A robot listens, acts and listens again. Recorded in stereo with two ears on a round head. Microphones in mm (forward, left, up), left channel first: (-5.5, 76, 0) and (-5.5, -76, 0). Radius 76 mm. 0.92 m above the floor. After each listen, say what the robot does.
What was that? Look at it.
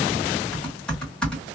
Turn 30° left.
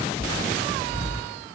Turn 25° right.
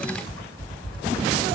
Found it: typing on a keyboard, straight ahead, 1 to 2 m away.